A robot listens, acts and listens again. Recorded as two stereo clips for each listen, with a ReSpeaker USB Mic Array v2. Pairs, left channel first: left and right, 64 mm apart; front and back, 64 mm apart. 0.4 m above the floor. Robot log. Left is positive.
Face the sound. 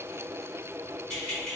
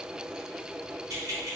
note: The keys jangling: 170° left.
cmd yaw +170
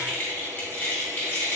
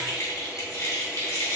note: The keys jangling is now 40° left.
cmd yaw +40
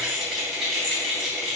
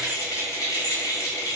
end: Found it: keys jangling, straight ahead, 1 to 2 m away.